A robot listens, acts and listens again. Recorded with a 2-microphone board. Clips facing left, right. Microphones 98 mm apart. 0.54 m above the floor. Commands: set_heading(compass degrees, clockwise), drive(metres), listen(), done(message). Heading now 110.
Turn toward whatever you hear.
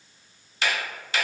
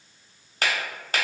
set_heading(160)
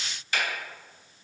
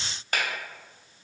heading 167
set_heading(227)
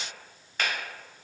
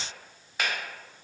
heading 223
done("Found it: a finger snap, straight ahead.")